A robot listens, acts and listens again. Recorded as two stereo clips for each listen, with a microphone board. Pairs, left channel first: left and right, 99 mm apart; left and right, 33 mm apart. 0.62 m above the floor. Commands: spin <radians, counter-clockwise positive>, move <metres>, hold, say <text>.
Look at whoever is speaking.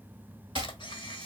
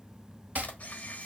hold
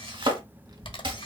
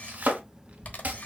spin -0.79
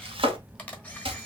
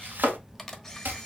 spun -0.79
say Found it: a child speaking, straight ahead.